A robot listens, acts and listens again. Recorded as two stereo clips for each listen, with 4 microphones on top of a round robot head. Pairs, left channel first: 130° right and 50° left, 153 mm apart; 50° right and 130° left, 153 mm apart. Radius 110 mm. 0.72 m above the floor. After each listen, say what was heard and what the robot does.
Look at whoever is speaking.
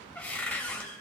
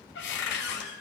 Keep listening.
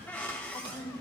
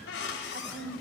The woman speaking: 155° left. Turn 155° left.
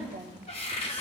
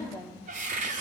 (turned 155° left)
Facing the woman speaking, 2 to 4 m away.